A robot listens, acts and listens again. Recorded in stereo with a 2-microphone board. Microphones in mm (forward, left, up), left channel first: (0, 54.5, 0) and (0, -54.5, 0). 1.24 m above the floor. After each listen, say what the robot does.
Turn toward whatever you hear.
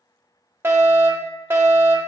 Turn 20° right.
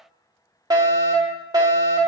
Turn 135° right.
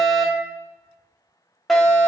Found it: a fire alarm, straight ahead.